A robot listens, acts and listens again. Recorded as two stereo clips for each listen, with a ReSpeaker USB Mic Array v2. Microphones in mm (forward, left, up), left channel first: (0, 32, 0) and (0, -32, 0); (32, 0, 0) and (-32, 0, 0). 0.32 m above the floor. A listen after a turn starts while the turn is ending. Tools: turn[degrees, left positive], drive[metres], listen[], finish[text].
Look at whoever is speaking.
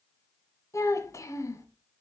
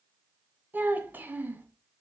Thought: The child speaking: 125° left.
Action: turn[125]
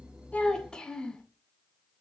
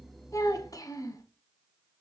Thought: The child speaking is now 15° left.
Action: turn[15]
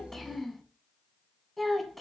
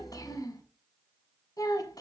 Action: finish[Facing the child speaking, 1 to 2 m away.]